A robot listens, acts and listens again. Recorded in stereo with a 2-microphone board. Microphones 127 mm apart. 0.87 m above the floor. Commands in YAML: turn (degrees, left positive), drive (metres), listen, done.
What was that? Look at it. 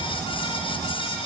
listen: true
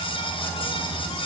listen: true
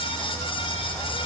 done: "I can't make out anything to turn to."